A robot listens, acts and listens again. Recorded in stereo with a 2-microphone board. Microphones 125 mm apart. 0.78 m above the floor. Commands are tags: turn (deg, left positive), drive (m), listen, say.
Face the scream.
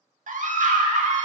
<turn deg="-75"/>
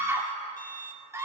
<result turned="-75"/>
<turn deg="-20"/>
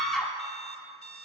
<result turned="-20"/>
<say>Found it: a scream, straight ahead.</say>